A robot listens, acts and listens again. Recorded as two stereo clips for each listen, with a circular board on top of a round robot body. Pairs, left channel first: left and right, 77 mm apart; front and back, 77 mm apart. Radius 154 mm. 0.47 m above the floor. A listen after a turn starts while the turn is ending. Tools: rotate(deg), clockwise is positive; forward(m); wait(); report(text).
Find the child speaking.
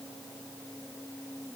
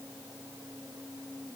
wait()
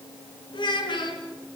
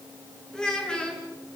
rotate(-80)
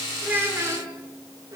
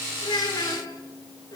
rotate(40)
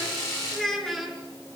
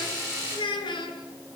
report("Facing the child speaking.")